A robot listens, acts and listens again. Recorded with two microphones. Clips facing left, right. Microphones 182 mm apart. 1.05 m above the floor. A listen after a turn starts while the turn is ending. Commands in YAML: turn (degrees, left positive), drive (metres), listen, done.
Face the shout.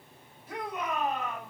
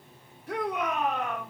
turn: -75
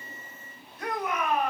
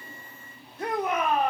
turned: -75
turn: -30
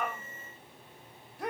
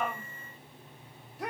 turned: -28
done: "Found it: a shout, straight ahead."